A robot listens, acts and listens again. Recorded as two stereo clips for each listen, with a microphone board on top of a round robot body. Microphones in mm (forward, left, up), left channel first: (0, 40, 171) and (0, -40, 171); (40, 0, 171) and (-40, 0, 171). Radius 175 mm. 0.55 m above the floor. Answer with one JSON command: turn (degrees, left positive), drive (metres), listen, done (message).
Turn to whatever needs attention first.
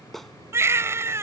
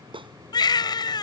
{"turn": -35}
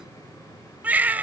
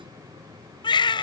{"turn": -20}
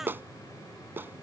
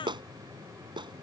{"listen": true}
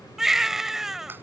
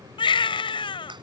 {"done": "Found it: a baby crying, straight ahead."}